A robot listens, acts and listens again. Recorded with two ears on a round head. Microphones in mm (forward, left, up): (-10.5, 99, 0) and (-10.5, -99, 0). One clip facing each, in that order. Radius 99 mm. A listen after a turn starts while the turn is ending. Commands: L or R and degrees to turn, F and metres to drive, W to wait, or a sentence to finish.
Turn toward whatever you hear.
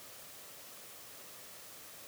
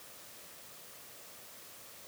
W
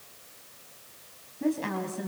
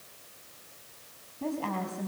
L20
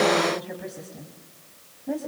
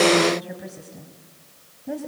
Facing the woman speaking.